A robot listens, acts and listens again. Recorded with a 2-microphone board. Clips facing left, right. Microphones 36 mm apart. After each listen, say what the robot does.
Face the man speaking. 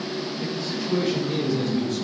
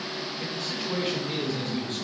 Turn 40° right.
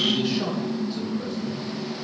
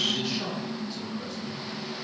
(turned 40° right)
Facing the man speaking.